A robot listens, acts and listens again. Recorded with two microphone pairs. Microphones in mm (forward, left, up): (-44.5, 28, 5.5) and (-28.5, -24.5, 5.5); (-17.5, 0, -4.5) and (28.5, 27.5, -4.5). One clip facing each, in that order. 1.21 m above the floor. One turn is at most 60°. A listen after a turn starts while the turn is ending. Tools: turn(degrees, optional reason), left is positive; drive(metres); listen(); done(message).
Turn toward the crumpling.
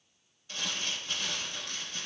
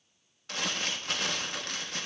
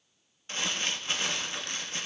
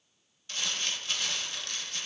turn(degrees=-60, reason="The crumpling: 90° right.")
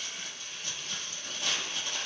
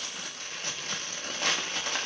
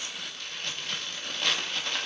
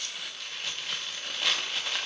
turn(degrees=-55, reason="The crumpling is now 55° right.")
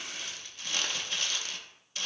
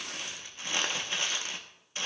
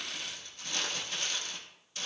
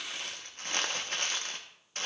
turn(degrees=-10, reason="The crumpling is now 10° right.")
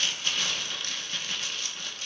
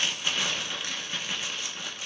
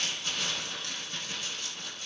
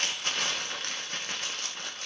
done("Found it: crumpling, straight ahead, under 1 m away.")